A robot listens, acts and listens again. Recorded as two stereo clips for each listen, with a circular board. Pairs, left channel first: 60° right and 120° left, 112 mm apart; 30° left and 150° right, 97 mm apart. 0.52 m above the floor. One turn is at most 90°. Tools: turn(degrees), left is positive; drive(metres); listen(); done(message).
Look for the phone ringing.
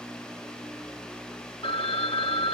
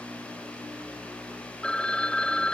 turn(degrees=-50)
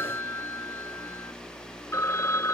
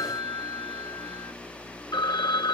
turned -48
done("Found it: a phone ringing, straight ahead.")